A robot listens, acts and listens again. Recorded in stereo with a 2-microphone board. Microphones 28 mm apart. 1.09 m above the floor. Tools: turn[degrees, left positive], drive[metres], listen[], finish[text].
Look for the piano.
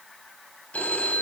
Action: listen[]
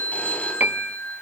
Action: turn[-90]
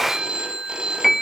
Action: finish[Found it: a piano, straight ahead.]